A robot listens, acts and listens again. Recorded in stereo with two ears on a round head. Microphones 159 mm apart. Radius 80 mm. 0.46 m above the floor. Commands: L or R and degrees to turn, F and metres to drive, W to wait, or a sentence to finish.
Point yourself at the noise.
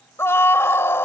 L15
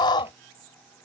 L150
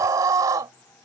R25
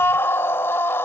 L15
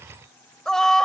Found it: a scream, straight ahead.